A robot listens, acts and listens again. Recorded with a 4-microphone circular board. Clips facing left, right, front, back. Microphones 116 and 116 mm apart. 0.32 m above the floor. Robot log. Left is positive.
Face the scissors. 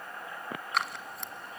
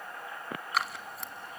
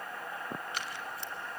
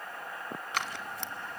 note: The scissors: straight behind.
cmd yaw +180
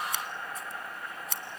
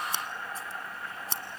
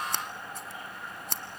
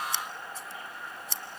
note: The scissors is now 35° right.
cmd yaw -35
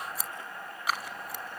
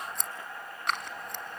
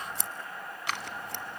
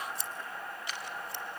end: Found it: scissors, straight ahead, 1 to 2 m away.